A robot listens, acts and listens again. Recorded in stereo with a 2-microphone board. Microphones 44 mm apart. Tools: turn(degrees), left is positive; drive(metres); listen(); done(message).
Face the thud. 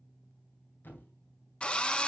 turn(degrees=50)
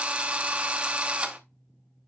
listen()
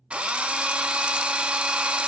done("I heard a thud, but can't make it out now. It was about straight ahead or 80° left.")